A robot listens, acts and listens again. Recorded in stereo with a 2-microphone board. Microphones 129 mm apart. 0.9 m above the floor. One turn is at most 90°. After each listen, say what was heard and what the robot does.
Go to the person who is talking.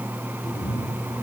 Keep listening.
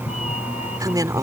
The woman speaking: about 30° right or 150° right. Turn 30° right.
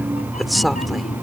Keep listening.
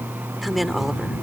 Drive 1.0 m forward.
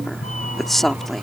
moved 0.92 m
Drive 1.0 m forward.
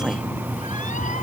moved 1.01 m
Keep listening.
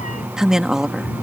Drive 1.0 m forward.
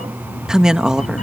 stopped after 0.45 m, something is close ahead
I am next to the woman speaking.